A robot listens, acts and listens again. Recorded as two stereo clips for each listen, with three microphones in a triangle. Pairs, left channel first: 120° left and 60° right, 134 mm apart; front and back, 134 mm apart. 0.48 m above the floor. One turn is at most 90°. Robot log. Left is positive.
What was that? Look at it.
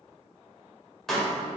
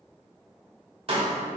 note: The pop: 155° right.
cmd yaw -90
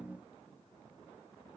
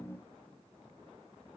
note: Nothing new. It was at 65° right.
cmd yaw -65
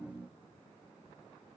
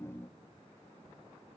end: I heard a pop from this way, but can't make it out now.